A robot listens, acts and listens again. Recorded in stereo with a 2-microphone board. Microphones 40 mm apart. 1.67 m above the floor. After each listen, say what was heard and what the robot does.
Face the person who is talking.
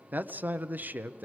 The man speaking: about 45° right or 135° right. Turn 45° right.
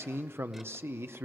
So it is at 90° right. Turn 90° right.
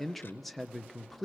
Found it: a man speaking, straight ahead, under 1 m away.